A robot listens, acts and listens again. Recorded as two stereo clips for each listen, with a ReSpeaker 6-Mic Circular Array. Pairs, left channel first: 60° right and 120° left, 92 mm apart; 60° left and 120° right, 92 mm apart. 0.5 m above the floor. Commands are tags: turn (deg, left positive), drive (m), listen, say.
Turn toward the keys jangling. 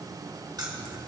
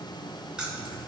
<turn deg="160"/>
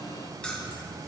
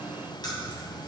<turn deg="20"/>
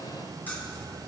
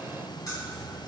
<turn deg="10"/>
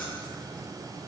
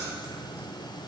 <listen/>
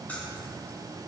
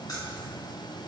<turn deg="15"/>
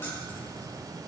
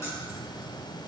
<listen/>
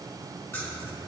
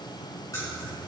<say>Found it: keys jangling, straight ahead, 2 to 4 m away.</say>